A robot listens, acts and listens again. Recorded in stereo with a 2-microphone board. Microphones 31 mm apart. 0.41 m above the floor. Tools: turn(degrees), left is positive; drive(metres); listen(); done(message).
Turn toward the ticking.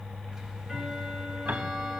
turn(degrees=-15)
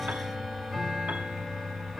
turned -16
done("Facing the ticking, 1 to 2 m away.")